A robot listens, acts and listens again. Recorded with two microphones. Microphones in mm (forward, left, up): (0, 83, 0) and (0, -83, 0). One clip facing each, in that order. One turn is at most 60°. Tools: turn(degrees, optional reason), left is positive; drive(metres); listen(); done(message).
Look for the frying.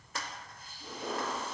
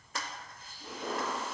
listen()
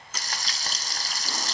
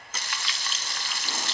turn(degrees=40, reason="The frying: about 40° left or 140° left.")
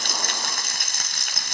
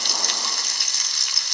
turn(degrees=60, reason="So it is at 95° left.")
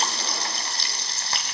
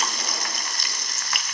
turn(degrees=35, reason="The frying is now 35° left.")
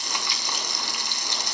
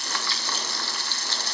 turn(degrees=20, reason="The frying is now 20° left.")
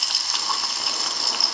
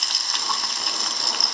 done("Facing the frying, 2 to 4 m away.")